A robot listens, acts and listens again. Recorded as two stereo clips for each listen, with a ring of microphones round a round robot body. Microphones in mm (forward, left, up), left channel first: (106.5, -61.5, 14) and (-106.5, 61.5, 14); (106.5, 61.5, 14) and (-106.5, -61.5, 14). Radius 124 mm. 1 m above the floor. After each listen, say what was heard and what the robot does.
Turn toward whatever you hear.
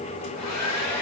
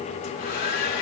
The hair dryer: 25° right. Turn 25° right.
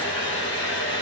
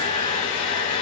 Facing the hair dryer.